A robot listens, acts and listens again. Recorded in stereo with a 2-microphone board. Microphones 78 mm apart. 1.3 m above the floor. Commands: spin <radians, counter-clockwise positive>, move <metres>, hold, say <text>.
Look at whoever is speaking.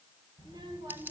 spin -1.13
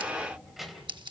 say Facing the child speaking, 2 to 4 m away.